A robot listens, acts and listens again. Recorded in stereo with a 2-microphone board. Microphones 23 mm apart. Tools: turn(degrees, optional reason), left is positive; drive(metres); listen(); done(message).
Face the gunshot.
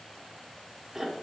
listen()
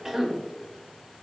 listen()
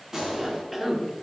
turn(degrees=-30, reason="The gunshot: about 30° right or 150° right.")
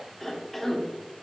listen()
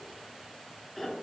done("I heard a gunshot, but can't make it out now. It was about straight ahead or 120° right.")